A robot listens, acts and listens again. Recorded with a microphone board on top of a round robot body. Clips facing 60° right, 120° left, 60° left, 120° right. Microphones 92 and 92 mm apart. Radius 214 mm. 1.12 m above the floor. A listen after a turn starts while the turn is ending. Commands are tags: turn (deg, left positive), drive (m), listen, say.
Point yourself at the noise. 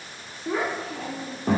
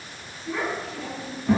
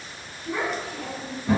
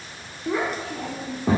<turn deg="-95"/>
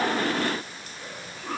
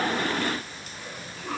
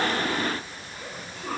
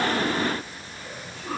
<turn deg="15"/>
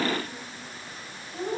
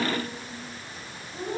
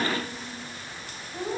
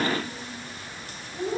<say>Facing the child speaking.</say>